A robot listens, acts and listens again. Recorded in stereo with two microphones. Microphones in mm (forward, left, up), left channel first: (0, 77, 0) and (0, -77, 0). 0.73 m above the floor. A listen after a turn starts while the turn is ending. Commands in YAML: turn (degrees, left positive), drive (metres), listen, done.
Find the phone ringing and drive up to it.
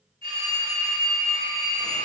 turn: -40
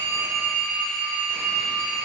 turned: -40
drive: 1.0
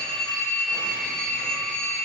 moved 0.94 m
drive: 1.0
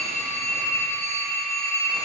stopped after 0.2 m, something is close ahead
turn: 20
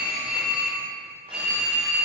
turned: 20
done: "I am next to the phone ringing."